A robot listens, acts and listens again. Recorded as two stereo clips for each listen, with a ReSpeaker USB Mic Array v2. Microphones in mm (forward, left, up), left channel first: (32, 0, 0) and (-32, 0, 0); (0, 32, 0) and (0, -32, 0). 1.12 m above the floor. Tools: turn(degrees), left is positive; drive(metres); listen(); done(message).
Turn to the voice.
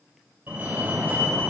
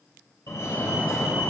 listen()
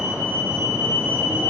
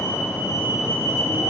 listen()
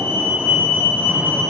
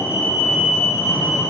done("I can't make out anyone speaking to turn to.")